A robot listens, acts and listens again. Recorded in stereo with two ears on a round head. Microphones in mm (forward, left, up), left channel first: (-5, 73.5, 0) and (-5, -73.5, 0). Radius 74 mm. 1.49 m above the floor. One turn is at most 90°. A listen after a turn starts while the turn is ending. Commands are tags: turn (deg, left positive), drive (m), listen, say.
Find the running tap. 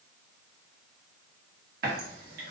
<turn deg="-60"/>
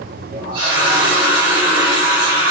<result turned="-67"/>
<turn deg="-30"/>
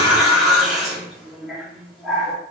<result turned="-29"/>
<say>Facing the running tap, 1 to 2 m away.</say>